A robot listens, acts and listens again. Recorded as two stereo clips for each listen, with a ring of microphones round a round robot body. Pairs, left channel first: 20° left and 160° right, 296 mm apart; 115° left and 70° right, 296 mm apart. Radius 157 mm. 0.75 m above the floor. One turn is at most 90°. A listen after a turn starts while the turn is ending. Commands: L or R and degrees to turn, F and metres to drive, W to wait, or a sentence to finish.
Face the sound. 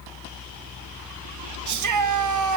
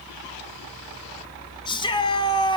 R90
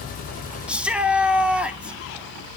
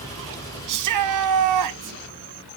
R70
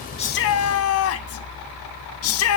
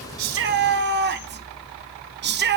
R15
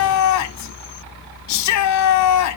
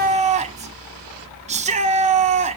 Found it: a shout, straight ahead, 1 to 2 m away.